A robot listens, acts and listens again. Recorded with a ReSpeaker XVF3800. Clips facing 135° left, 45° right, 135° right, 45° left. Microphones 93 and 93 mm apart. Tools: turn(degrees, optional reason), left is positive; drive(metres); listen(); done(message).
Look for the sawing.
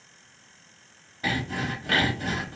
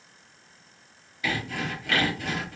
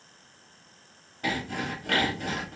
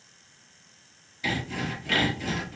turn(degrees=-170, reason="The sawing: 170° right.")
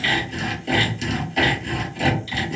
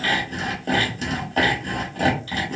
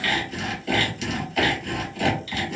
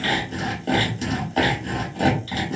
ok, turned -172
done("Found it: sawing, straight ahead, 1 to 2 m away.")